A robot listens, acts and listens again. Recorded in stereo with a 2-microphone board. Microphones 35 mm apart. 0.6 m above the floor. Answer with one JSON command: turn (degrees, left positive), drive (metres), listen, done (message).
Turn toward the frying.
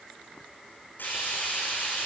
{"turn": 90}
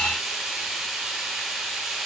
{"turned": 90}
{"turn": -10}
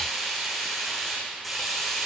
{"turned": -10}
{"done": "Found it: frying, straight ahead, over 4 m away."}